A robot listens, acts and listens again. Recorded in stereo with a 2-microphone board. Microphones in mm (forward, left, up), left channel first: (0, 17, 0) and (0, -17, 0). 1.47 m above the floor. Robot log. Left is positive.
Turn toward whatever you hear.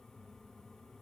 cmd idle
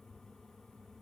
cmd idle
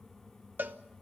note: The cowbell: about 65° right or 115° right.
cmd yaw -65
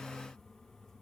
cmd idle
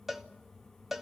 end: Facing the cowbell.